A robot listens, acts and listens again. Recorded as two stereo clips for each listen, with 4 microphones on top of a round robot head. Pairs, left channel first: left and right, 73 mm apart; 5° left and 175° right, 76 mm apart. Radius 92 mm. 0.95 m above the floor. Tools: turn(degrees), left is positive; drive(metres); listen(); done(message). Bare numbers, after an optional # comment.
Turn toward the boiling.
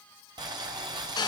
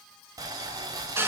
# The boiling: 125° right.
turn(-125)
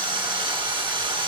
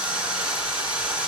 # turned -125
listen()
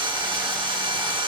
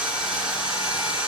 listen()
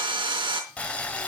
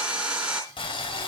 # The boiling is now 15° left.
turn(15)
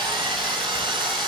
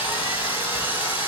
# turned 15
listen()
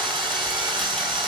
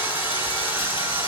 listen()
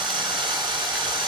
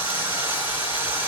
done("Facing where the boiling came from. I can't hear it now.")